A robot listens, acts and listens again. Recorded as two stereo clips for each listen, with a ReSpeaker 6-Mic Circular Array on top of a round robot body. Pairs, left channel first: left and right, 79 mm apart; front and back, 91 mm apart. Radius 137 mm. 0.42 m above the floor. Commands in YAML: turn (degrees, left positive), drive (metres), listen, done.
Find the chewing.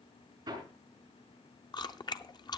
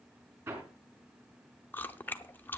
turn: 70
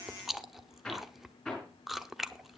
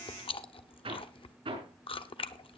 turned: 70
done: "Found it: chewing, straight ahead."